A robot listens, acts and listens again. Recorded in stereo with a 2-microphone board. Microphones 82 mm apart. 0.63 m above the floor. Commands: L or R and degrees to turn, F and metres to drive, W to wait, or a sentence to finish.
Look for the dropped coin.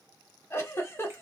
W
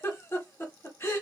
W
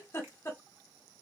I can't make out a dropped coin to turn to.